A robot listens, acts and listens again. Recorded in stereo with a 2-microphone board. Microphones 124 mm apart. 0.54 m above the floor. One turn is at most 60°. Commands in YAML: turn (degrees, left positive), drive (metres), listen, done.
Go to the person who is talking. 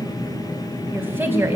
turn: -15
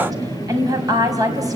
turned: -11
turn: -60
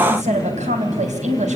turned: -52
turn: -60
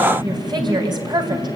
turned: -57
turn: -35
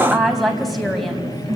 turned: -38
drive: 1.0
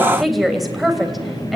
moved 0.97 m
drive: 1.0
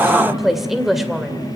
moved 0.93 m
drive: 1.0
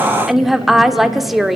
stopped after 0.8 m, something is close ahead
done: "I am next to the woman speaking."